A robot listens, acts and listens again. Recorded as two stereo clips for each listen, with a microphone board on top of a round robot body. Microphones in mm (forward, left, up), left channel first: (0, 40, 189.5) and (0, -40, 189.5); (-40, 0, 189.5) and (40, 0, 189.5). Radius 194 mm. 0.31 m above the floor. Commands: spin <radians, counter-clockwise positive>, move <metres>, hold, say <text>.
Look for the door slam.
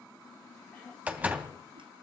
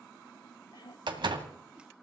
spin -0.35
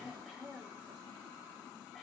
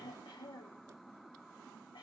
say I heard a door slam from this way, but can't make it out now.